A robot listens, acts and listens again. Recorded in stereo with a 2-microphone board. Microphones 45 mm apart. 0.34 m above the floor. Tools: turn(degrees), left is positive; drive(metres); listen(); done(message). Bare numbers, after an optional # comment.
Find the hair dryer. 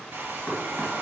# The hair dryer: about 55° right or 125° right.
turn(-55)
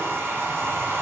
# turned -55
# So it is at 65° right.
turn(-65)
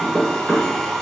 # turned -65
# The hair dryer is now 15° left.
turn(15)
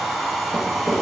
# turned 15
done("Found it: a hair dryer, straight ahead.")